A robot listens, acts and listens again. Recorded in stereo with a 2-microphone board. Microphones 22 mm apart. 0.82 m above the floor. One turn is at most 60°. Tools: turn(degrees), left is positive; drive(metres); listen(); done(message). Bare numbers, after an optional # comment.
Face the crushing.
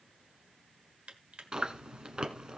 turn(-60)
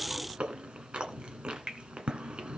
# So it is at 40° right.
turn(-40)
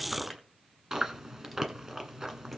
listen()
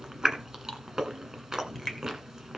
done("Found it: crushing, straight ahead.")